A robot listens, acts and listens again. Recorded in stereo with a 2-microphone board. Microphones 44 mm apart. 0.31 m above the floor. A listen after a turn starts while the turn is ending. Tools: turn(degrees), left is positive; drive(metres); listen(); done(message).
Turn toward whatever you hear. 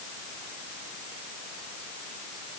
listen()
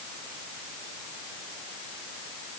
listen()
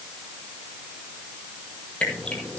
turn(degrees=20)
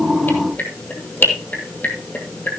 turn(degrees=140)
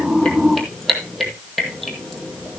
done("Facing the dripping.")